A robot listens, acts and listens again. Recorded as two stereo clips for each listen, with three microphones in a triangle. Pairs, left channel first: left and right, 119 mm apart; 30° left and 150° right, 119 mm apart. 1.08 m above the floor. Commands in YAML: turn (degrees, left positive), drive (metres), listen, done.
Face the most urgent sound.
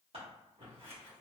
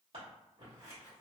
listen: true
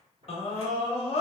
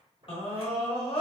turn: 65
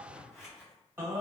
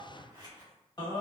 turn: -20
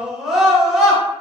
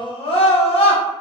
done: "Found it: a scream, straight ahead, 1 to 2 m away."